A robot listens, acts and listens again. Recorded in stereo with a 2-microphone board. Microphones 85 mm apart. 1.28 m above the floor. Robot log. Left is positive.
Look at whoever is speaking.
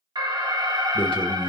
cmd yaw +90
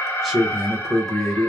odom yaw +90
end: Facing the man speaking, under 1 m away.